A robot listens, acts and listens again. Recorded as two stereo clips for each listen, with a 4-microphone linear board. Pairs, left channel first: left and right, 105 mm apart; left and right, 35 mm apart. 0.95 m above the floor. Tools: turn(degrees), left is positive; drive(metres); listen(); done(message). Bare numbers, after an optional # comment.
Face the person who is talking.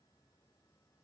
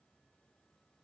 listen()
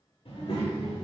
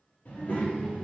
# The child speaking: about 70° left or 110° left.
turn(70)
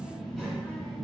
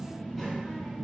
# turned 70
done("Facing the child speaking, under 1 m away.")